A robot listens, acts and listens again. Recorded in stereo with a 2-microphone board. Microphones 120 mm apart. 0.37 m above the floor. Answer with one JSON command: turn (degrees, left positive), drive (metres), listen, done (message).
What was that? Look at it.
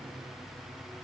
{"listen": true}
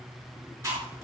{"turn": -25}
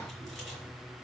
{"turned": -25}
{"listen": true}
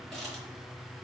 {"listen": true}
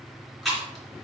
{"done": "Facing the chewing, 2 to 4 m away."}